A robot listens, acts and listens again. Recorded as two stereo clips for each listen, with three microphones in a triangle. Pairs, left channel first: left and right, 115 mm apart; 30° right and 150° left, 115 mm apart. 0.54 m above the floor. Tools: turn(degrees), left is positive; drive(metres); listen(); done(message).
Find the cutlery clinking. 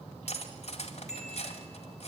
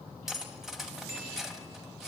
turn(degrees=65)
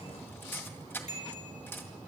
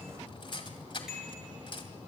turn(degrees=15)
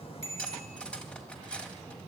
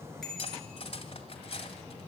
turn(degrees=10)
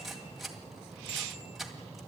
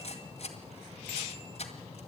done("Facing the cutlery clinking.")